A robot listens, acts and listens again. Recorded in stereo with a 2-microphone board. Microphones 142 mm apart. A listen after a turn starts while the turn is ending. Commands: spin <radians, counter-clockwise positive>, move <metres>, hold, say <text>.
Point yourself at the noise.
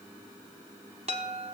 spin -0.87
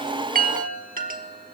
spin -1.40
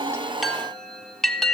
say Found it: a chime, straight ahead, 1 to 2 m away.